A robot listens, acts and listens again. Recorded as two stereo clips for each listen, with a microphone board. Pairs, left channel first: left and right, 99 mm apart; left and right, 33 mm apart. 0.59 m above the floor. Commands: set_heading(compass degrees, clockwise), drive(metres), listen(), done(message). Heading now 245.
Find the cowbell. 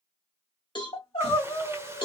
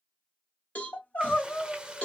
set_heading(190)
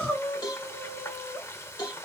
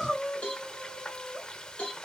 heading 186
set_heading(136)
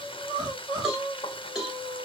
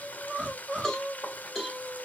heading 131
done("Facing the cowbell, 1 to 2 m away.")